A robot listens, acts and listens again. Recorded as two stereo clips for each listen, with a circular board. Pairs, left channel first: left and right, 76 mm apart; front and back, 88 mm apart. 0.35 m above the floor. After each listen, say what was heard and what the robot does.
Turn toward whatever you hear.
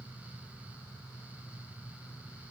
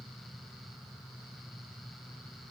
Keep listening.
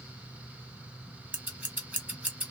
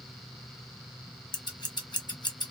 The scissors: 20° right. Turn 20° right.
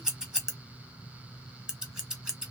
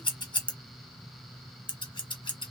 The scissors is now 10° right. Turn 10° right.
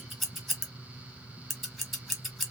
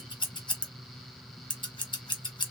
Facing the scissors.